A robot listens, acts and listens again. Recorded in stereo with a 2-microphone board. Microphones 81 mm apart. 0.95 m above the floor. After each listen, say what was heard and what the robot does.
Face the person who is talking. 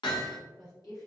The woman speaking: about 55° left or 125° left. Turn 55° left.
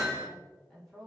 Facing the woman speaking.